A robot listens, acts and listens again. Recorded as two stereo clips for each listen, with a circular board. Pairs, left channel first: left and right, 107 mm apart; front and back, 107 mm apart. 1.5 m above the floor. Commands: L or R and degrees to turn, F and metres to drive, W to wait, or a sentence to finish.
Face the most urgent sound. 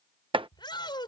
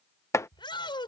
L45
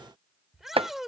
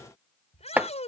Found it: a shout, straight ahead.